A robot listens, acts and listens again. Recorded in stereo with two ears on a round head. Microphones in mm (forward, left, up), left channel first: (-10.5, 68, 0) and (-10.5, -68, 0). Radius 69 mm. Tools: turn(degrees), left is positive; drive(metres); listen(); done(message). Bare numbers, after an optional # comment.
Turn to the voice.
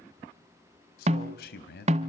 # The man speaking: about 70° left or 110° left.
turn(70)
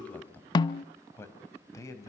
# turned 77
# So it is at 20° left.
turn(20)
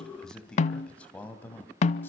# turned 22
# The man speaking is now 10° left.
turn(10)
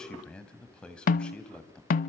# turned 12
done("Found it: a man speaking, straight ahead.")